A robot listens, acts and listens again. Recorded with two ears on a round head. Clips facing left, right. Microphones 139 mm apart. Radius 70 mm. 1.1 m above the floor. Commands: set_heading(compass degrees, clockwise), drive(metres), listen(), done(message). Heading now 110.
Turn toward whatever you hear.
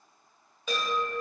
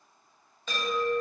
set_heading(80)
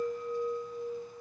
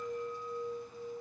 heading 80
set_heading(295)
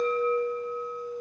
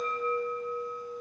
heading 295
done("Facing the chime, under 1 m away.")